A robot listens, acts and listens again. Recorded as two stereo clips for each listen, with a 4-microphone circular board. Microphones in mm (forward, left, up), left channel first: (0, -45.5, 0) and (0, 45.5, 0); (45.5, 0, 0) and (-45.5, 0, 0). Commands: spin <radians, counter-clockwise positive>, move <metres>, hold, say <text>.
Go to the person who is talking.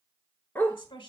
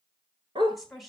spin -1.57
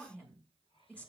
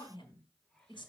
spin -0.26
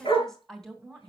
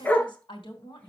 move 1.0
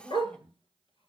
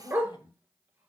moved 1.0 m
spin -0.17
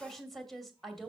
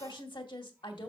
move 1.0
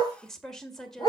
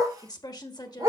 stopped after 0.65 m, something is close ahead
say Arrived at the woman speaking, straight ahead.